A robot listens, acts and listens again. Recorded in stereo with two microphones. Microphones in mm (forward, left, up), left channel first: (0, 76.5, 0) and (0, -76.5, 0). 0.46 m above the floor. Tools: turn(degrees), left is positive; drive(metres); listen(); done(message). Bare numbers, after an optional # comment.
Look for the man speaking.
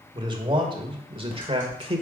# The man speaking: about 40° right or 140° right.
turn(-40)
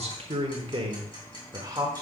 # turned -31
# So it is at 20° right.
turn(-20)
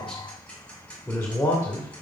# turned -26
# The man speaking is now 25° left.
turn(25)
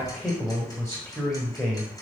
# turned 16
# The man speaking is now 15° left.
turn(15)
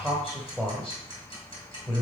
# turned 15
done("Found it: a man speaking, straight ahead, 1 to 2 m away.")